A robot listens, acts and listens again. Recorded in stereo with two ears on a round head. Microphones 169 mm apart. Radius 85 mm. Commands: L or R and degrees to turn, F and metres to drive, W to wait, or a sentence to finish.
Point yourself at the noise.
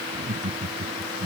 R35
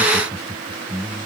Found it: laughter, straight ahead.